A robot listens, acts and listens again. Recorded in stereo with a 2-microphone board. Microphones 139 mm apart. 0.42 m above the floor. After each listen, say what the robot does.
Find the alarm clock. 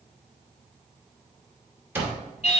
Turn 30° right.
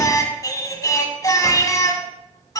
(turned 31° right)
Keep listening.
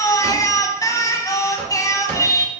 Turn 15° left.
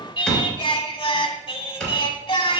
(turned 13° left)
Facing the alarm clock.